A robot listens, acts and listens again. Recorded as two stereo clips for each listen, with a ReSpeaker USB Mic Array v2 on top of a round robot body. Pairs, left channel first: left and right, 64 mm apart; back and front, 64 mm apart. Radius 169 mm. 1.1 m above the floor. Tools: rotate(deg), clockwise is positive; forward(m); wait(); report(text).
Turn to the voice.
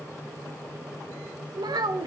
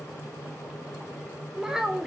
rotate(85)
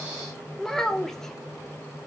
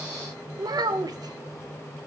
report("Facing the child speaking, 1 to 2 m away.")